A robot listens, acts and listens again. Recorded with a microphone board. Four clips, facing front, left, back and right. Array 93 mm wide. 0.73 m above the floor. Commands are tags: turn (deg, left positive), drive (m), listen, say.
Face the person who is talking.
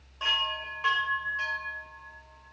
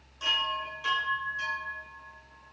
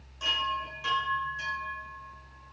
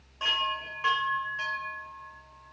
<listen/>
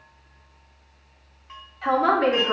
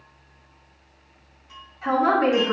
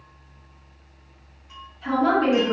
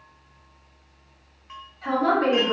<turn deg="15"/>
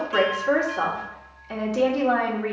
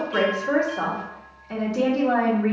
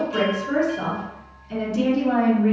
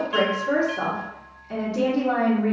<say>Found it: a woman speaking, straight ahead, 1 to 2 m away.</say>